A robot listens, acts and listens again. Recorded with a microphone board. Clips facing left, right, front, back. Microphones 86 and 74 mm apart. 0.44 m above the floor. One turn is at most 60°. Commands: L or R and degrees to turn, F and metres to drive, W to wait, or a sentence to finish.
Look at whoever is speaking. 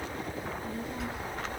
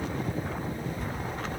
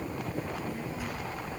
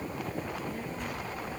L60
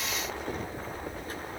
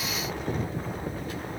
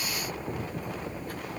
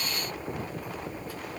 L40
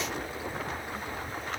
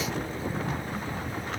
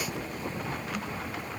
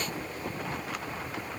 W
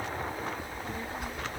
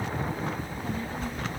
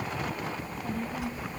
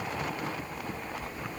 L15
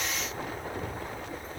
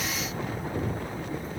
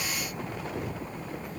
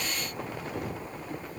Found it: a child speaking, straight ahead, over 4 m away.